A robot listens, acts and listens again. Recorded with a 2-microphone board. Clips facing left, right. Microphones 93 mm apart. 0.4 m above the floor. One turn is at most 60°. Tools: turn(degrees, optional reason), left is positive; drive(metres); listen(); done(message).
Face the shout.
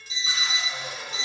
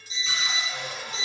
listen()
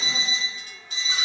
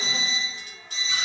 listen()
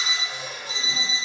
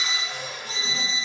done("I can't make out a shout, only a cupboard door and an alarm clock.")